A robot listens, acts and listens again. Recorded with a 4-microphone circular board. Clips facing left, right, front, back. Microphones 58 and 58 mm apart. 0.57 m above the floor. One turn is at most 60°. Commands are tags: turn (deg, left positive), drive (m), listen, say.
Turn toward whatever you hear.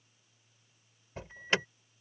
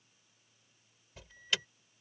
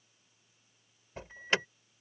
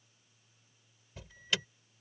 <turn deg="45"/>
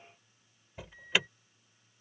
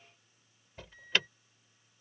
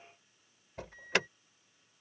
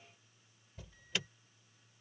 <turn deg="10"/>
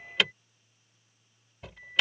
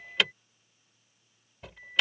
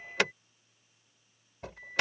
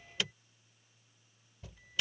<say>Found it: an alarm, straight ahead.</say>